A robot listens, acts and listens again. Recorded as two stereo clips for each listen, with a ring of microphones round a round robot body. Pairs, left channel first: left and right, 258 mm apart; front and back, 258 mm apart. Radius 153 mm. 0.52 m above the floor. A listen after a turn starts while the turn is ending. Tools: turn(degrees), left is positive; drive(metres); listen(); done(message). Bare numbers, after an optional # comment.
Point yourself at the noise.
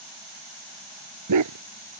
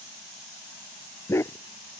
# The dog barking: 80° right.
turn(-80)
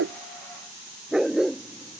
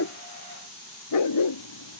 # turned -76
done("Facing the dog barking.")